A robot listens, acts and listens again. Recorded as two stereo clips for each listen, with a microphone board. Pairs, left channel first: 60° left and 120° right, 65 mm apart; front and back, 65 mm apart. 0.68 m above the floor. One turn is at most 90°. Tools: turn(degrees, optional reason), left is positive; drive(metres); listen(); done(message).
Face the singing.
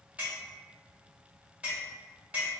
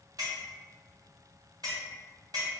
listen()
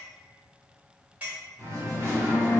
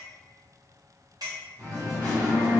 turn(degrees=-90, reason="The singing: 170° right.")
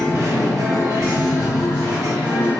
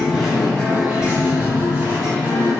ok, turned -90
turn(degrees=-90, reason="The singing is now 120° right.")
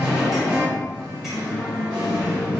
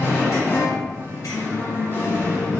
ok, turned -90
turn(degrees=-55, reason="The singing is now 55° right.")
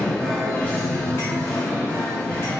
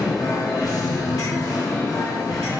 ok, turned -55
turn(degrees=-10, reason="The singing is now 10° right.")
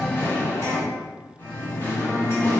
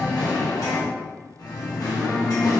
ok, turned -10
done("Facing the singing, 1 to 2 m away.")